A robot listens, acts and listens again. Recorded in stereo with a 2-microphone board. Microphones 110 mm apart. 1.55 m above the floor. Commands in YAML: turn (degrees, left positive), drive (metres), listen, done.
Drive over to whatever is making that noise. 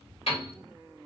turn: 65
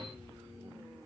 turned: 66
listen: true
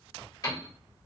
turn: 40
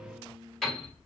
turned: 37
drive: 1.0
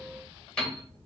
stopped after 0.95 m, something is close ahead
turn: 10
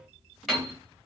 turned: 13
done: "Arrived at the piano, straight ahead."